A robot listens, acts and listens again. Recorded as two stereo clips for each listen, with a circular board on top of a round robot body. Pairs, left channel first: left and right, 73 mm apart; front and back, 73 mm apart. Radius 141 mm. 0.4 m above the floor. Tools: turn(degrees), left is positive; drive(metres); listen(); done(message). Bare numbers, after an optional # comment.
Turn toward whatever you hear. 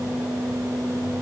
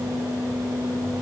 listen()
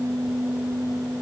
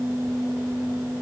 listen()
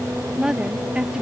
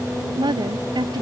# The woman speaking: 170° right.
turn(-170)
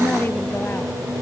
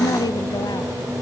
# The woman speaking is now 25° left.
turn(25)
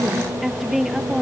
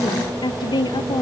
done("Found it: a woman speaking, straight ahead.")